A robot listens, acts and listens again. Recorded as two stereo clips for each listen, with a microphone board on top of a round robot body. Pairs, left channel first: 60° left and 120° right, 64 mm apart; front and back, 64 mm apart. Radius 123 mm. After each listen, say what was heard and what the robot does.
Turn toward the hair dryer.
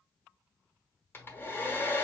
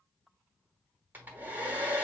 The hair dryer: 120° left. Turn 120° left.
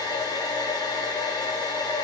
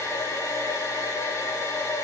The hair dryer is now 50° left. Turn 50° left.
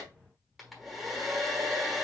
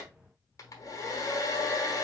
The hair dryer is now 30° right. Turn 30° right.
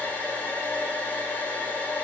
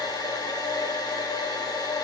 Found it: a hair dryer, straight ahead, 1 to 2 m away.